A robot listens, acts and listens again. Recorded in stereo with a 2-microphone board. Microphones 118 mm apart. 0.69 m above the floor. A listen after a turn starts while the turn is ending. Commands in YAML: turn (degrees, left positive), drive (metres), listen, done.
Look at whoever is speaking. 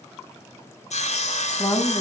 turn: 35
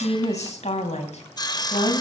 turn: 105
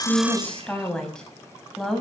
done: "Facing the woman speaking."